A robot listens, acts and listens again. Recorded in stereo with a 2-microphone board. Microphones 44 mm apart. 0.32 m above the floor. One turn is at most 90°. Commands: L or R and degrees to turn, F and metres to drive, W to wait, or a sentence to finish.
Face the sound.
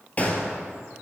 L30
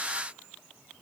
W
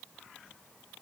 I heard a gunshot, but can't make it out now. It was about straight ahead or 120° left.